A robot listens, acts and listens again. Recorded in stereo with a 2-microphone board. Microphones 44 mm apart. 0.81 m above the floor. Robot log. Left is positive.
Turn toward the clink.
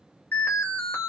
cmd idle
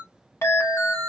note: The clink: about 75° left or 105° left.
cmd yaw +75
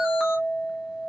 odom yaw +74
note: So it is at 20° left.
cmd yaw +20
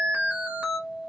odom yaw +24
end: Found it: a clink, straight ahead.